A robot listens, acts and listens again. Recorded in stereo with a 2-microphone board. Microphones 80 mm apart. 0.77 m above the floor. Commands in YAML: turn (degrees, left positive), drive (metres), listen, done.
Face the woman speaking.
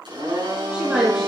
turn: -30
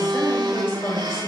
turn: 30
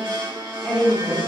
done: "Found it: a woman speaking, straight ahead, over 4 m away."